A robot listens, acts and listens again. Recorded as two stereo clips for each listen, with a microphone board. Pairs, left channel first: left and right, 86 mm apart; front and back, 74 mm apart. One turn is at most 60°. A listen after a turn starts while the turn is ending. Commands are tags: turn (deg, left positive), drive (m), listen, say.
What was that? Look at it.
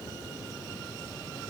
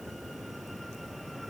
<listen/>
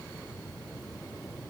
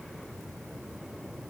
<listen/>
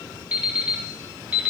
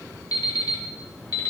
<turn deg="-15"/>
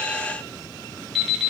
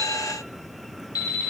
<say>Facing the alarm clock.</say>